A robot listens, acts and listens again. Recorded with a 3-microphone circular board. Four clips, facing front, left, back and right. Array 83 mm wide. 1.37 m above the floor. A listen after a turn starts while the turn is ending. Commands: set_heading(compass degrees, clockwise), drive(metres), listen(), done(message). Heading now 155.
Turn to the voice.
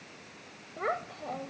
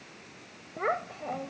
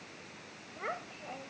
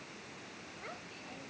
set_heading(90)
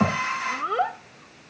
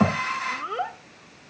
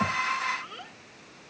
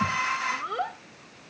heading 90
done("Found it: a child speaking, straight ahead.")